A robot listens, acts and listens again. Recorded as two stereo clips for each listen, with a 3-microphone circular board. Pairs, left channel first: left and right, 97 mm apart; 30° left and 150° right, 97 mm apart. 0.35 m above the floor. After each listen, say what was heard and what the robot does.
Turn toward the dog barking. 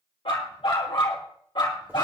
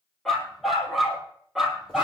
The dog barking: 125° left. Turn 125° left.
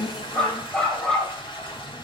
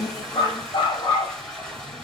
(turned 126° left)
The dog barking is now 10° left. Turn 10° left.
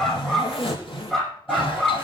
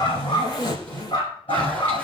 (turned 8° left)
Found it: a dog barking, straight ahead.